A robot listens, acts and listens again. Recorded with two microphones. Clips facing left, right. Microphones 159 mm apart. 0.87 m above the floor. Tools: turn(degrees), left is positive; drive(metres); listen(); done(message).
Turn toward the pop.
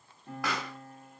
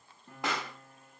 turn(degrees=-25)
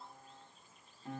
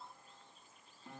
listen()
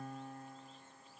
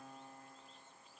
done("I heard a pop, but can't make it out now. It was about straight ahead or 130° right.")